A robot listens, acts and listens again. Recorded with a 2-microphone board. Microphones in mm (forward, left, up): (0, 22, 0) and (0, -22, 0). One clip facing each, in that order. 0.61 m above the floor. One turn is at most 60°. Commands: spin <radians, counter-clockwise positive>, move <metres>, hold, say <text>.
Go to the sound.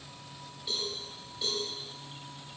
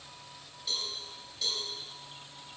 spin 0.35
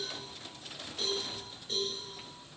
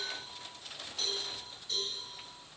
spin 1.05
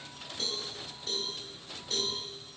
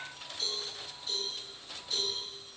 spin 1.05
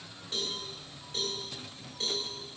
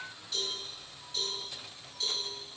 spin 0.70
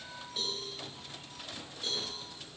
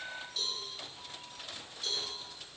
spin 0.35
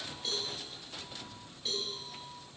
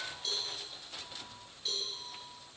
move 1.0
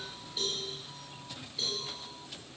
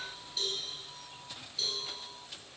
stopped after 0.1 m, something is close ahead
spin 0.17
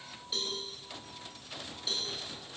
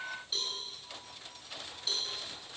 say Something is in my way. I am facing the cowbell but have not reached it.